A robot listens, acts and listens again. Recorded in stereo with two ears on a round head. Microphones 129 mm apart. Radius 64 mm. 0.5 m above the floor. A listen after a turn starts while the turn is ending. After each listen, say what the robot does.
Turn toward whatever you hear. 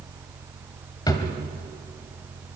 Turn 30° left.
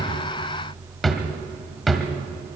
Facing the drawer.